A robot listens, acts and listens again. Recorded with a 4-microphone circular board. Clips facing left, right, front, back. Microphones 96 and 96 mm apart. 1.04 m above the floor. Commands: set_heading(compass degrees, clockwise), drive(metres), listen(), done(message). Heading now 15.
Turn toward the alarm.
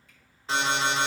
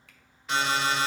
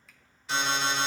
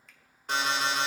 set_heading(230)
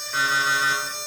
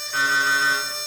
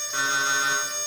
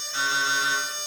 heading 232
done("Found it: an alarm, straight ahead.")